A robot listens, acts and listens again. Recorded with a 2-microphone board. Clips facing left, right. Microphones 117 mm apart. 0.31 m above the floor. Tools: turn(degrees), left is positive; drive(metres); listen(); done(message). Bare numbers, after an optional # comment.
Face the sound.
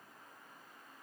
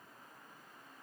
listen()
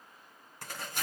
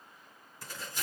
# The tearing paper: about 65° left or 115° left.
turn(65)
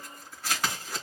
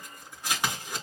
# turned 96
# So it is at 15° right.
turn(-15)
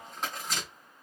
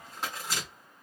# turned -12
done("Facing the tearing paper.")